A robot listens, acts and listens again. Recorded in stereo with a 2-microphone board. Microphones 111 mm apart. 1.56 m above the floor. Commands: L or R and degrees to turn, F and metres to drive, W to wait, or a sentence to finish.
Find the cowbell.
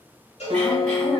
L90
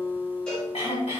W
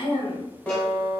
W
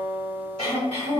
I heard a cowbell from this way, but can't make it out now.